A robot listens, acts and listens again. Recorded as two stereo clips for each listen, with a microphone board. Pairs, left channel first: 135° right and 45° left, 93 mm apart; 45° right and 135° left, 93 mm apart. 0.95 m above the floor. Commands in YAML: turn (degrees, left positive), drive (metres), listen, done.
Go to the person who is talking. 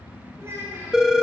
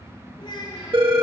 turn: -15
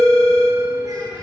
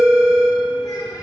listen: true
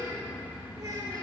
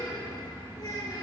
drive: 1.0
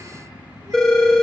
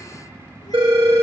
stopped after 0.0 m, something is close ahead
listen: true
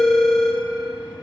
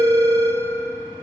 listen: true
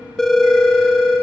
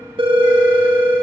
done: "Facing where the child speaking came from. I can't hear it now. I did not reach it."